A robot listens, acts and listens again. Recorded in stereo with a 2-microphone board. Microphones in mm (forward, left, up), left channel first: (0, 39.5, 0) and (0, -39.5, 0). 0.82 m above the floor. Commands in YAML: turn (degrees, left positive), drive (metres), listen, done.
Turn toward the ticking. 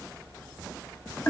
listen: true
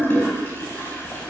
listen: true
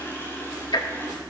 turn: 70
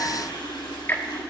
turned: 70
turn: 30
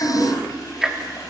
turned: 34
done: "Facing the ticking, 1 to 2 m away."